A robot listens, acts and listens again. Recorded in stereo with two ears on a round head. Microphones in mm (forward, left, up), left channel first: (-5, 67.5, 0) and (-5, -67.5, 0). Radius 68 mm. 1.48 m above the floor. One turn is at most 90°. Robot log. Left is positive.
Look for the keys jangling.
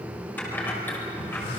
cmd yaw +30
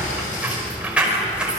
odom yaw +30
end: Facing the keys jangling, over 4 m away.